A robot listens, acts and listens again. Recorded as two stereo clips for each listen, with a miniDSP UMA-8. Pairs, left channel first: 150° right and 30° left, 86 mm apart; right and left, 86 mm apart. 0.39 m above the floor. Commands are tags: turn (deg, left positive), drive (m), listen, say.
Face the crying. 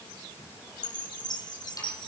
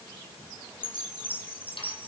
<listen/>
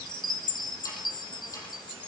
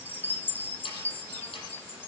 <listen/>
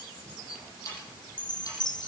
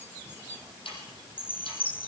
<say>I can't make out crying to turn to.</say>